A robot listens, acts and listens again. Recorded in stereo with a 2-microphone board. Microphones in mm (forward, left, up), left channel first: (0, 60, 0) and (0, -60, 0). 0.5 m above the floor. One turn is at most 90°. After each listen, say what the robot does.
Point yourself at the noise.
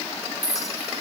Turn 30° left.
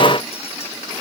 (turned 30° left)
Keep listening.
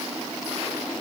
Keep listening.
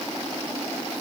I heard a clink, but can't make it out now. It was about straight ahead or 120° left.